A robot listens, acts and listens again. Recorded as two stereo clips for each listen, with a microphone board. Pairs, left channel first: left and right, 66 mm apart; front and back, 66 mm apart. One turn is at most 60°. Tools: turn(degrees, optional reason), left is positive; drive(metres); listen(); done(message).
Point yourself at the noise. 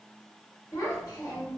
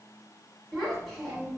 turn(degrees=60, reason="The child speaking: 90° left.")
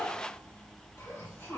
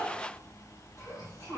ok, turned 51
turn(degrees=40, reason="The child speaking is now 40° left.")
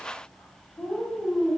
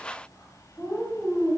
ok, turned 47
done("Found it: a child speaking, straight ahead, 1 to 2 m away.")